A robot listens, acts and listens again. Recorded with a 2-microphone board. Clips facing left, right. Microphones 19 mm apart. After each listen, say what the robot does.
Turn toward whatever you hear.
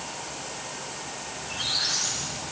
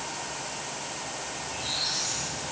Turn 70° left.
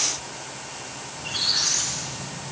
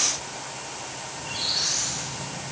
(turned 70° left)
Turn 30° left.
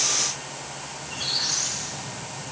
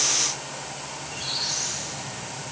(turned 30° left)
Turn 25° left.
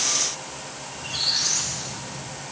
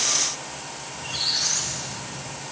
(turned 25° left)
Found it: a squeak, straight ahead.